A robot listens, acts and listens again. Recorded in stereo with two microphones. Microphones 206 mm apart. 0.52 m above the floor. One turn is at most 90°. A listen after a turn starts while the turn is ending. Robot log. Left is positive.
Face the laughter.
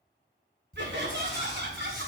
note: The laughter: about 65° right or 115° right.
cmd yaw -65
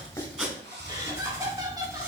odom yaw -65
note: So it is at 20° right.
cmd yaw -20
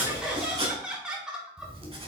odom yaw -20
end: Facing the laughter, 2 to 4 m away.